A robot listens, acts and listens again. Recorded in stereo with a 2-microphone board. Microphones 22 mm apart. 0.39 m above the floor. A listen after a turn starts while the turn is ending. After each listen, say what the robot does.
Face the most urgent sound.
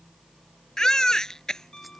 Turn 30° left.
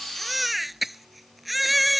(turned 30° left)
Facing the baby crying.